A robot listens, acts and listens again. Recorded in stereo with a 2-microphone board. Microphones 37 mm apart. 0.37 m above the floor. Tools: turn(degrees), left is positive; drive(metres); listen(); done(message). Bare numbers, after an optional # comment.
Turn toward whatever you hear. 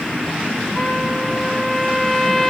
# The trumpet: about 15° left or 165° left.
turn(15)
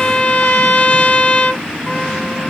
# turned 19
# So it is at 145° left.
turn(145)
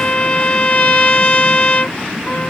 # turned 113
# The trumpet is now 35° left.
turn(35)
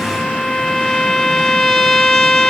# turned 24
# The trumpet is now 10° left.
turn(10)
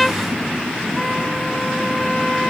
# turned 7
done("Found it: a trumpet, straight ahead.")